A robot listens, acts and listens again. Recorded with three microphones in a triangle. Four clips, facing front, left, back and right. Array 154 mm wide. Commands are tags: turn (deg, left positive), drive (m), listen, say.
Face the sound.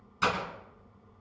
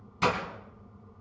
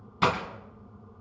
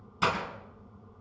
<turn deg="-175"/>
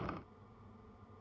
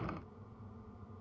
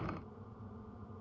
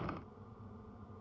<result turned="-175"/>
<say>I heard breaking glass from this way, but can't make it out now.</say>